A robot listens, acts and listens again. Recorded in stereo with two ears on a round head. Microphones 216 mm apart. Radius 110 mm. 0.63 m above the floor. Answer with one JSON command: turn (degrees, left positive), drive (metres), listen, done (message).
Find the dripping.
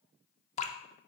{"turn": 30}
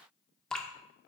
{"done": "Facing the dripping, under 1 m away."}